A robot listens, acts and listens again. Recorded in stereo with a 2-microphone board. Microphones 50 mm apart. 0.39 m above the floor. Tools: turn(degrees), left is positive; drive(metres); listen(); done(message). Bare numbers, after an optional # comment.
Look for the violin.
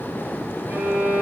# The violin: about 40° right or 140° right.
turn(-40)
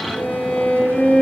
done("Facing the violin, 2 to 4 m away.")